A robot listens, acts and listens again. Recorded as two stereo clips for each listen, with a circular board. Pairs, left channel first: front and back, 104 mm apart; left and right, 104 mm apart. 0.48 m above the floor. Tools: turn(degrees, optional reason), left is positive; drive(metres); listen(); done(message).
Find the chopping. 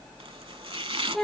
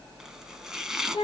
turn(degrees=-175, reason="The chopping: 175° right.")
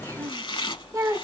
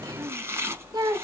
turn(degrees=-30, reason="The chopping is now 30° right.")
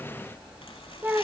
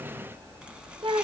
listen()
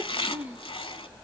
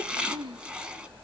turn(degrees=-10, reason="The chopping is now 10° right.")
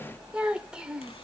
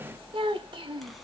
listen()
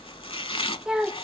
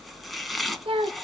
done("Facing the chopping, under 1 m away.")